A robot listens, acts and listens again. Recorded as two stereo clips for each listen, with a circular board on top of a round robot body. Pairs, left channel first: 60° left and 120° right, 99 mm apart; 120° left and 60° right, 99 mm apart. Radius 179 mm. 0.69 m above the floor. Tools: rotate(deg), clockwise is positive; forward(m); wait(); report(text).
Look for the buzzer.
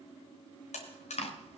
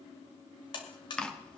rotate(-75)
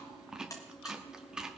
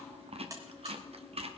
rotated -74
report("Facing the buzzer.")